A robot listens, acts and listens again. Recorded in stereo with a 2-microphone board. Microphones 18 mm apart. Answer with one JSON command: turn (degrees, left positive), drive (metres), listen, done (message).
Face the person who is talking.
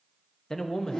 {"turn": 45}
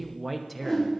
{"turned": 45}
{"done": "Found it: a man speaking, straight ahead."}